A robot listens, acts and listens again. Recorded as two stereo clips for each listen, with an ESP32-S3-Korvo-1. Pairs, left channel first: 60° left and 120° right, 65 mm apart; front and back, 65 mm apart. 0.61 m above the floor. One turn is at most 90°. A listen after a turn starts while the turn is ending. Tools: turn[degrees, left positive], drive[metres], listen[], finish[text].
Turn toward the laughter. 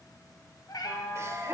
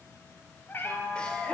Thought: The laughter: 70° right.
Action: turn[-70]
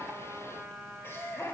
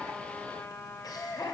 Thought: The laughter is now 10° left.
Action: turn[10]
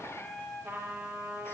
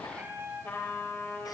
Action: listen[]
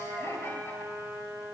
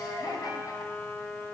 Thought: The laughter is now 10° left.
Action: turn[10]
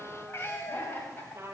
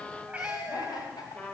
Action: finish[Facing the laughter.]